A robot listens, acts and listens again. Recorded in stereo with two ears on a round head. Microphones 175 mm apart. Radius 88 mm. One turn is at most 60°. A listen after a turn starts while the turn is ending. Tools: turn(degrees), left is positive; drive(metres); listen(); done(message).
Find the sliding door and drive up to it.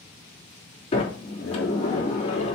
turn(degrees=35)
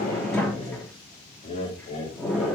drive(metres=1.0)
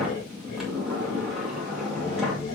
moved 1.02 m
drive(metres=1.0)
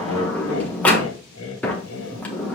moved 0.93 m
turn(degrees=10)
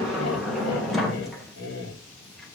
drive(metres=1.0)
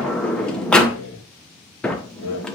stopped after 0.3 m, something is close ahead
done("Arrived at the sliding door, straight ahead.")